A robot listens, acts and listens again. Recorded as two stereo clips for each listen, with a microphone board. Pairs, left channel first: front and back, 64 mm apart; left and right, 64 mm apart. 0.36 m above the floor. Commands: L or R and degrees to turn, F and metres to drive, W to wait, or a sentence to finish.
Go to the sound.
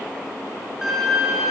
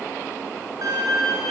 R100
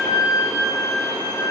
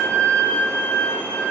L20
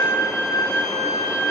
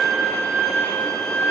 F1.0
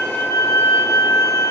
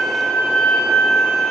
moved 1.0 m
F1.0
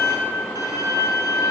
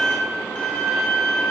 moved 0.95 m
L10
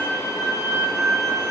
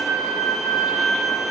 F1.0
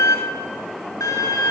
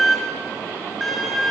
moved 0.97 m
F1.0
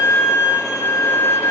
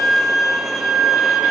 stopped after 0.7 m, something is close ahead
R10
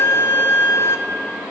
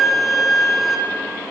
Arrived at the violin, straight ahead.